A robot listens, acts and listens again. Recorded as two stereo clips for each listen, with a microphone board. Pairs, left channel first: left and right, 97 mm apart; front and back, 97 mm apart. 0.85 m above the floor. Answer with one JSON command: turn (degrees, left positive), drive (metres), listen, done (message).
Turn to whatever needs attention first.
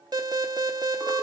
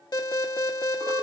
{"turn": -45}
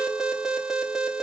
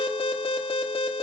{"done": "Facing the alarm, under 1 m away."}